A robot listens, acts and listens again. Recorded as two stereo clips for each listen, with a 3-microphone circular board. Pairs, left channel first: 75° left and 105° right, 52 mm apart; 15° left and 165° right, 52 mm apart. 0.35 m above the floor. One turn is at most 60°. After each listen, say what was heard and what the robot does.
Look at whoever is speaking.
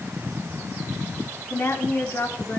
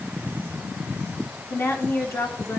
The woman speaking: 40° left. Turn 40° left.
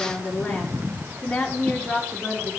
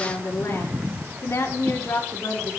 Found it: a woman speaking, straight ahead, over 4 m away.